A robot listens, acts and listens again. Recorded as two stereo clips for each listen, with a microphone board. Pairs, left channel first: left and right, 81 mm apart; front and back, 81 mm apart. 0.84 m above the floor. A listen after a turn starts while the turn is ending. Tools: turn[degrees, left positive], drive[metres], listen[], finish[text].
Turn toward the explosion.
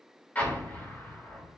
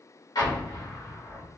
Thought: The explosion: 20° left.
Action: turn[20]
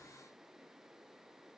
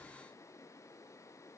Action: finish[Facing where the explosion came from. I can't hear it now.]